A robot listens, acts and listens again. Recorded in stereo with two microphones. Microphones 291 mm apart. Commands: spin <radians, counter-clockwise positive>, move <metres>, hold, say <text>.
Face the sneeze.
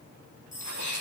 spin 1.31
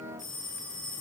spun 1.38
hold
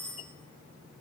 say I heard a sneeze, but can't make it out now. It was about 5° right or 25° left.